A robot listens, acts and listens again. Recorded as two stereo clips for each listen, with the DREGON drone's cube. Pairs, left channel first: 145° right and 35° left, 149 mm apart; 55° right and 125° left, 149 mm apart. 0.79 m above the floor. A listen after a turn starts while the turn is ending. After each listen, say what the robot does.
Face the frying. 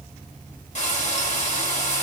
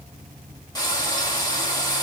Turn 110° right.
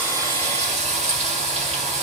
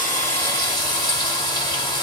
Facing the frying.